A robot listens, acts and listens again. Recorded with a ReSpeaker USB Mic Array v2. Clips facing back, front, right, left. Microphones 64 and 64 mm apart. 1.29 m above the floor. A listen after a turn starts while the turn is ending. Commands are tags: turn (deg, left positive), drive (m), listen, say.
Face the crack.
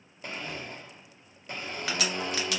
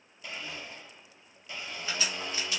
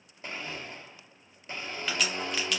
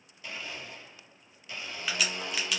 <turn deg="175"/>
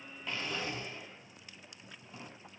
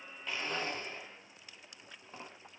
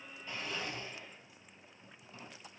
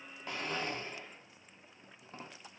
<say>Facing where the crack came from. I can't hear it now.</say>